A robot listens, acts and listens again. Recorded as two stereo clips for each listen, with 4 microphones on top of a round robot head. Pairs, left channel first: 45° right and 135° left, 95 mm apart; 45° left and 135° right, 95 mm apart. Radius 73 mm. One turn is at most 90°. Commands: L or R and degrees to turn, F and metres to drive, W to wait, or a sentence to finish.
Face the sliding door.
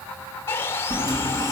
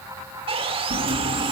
R90
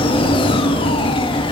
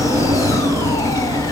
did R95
R80
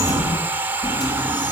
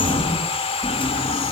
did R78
Found it: a sliding door, straight ahead.